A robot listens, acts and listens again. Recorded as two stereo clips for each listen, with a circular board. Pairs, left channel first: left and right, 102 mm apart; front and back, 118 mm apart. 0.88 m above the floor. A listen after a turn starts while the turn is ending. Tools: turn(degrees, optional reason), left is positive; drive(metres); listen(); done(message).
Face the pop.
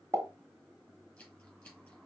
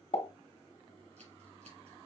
turn(degrees=-35, reason="The pop: 35° right.")
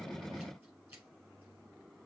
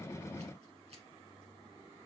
done("I heard a pop from this way, but can't make it out now.")